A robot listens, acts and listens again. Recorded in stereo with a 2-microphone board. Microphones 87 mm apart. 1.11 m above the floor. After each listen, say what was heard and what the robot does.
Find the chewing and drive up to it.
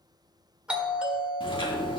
The chewing: about 70° left or 110° left. Turn 70° left.
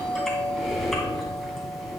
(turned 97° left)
Drive 1.0 m forward.
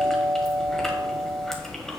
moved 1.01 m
Drive 1.0 m forward.
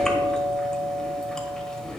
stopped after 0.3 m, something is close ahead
The chewing is now 10° left. Turn 10° left.
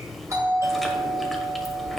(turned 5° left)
Arrived at the chewing, straight ahead.